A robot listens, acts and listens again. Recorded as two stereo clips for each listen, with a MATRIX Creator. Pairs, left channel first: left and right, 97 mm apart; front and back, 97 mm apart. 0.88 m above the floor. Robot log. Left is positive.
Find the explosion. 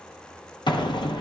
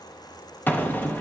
note: The explosion: 70° left.
cmd yaw +70
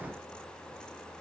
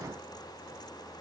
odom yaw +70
end: I heard an explosion from this way, but can't make it out now.